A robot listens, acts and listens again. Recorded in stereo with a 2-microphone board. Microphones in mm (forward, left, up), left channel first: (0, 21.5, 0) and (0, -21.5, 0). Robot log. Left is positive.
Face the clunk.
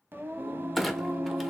cmd yaw +30
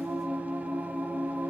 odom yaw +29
cmd idle
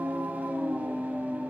end: I heard a clunk, but can't make it out now. It was about 30° right or 150° left.